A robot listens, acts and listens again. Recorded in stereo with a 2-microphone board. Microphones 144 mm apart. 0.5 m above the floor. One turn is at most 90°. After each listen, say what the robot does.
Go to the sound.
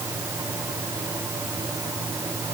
Keep listening.
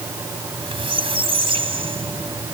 Turn 40° right.
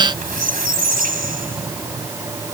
Turn 90° right.
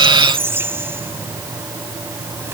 Turn 15° right.
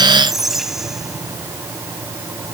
Drive 1.0 m forward.
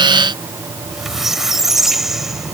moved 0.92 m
Drive 1.0 m forward.
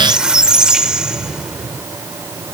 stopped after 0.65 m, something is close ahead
Arrived at the squeak, straight ahead.